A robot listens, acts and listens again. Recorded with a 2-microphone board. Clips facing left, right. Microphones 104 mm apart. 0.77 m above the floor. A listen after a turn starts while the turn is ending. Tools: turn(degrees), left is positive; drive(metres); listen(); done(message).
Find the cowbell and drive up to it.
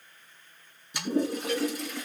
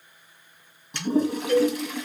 turn(degrees=-35)
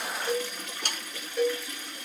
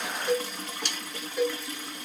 drive(metres=1.0)
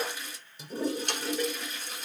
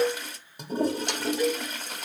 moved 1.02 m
turn(degrees=-10)
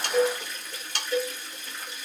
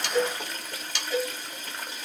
drive(metres=1.0)
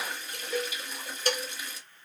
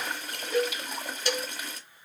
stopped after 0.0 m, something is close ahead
done("Arrived at the cowbell, straight ahead.")